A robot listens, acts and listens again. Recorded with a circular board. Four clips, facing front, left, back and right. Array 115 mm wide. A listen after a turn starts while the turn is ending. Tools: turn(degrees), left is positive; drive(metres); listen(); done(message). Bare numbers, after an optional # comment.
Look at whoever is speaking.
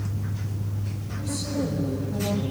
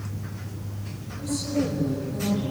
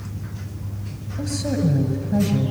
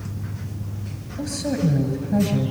# The woman speaking: 140° right.
turn(-140)
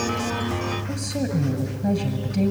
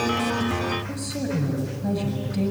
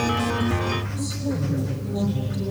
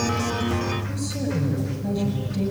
done("Found it: a woman speaking, straight ahead.")